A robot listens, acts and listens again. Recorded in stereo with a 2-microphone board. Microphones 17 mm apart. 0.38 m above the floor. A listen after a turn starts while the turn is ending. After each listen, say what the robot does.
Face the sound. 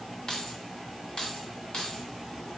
Turn 50° left.
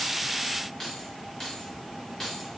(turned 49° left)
Turn 15° left.
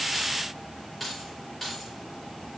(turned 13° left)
Facing the keys jangling, over 4 m away.